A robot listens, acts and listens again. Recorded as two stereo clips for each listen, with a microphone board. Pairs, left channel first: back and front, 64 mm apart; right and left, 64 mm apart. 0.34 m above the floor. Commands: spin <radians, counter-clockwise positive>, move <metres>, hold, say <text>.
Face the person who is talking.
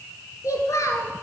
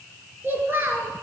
spin 2.53
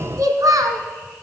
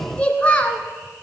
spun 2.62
spin -0.44
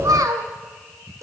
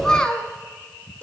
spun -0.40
spin -0.52
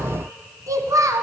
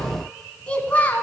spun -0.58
spin -0.44
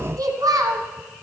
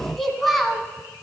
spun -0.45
say Facing the child speaking.